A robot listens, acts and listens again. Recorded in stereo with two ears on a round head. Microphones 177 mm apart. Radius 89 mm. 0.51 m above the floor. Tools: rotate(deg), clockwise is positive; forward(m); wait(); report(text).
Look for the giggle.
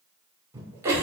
rotate(30)
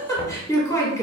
rotate(-15)
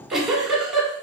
report("Facing the giggle, 1 to 2 m away.")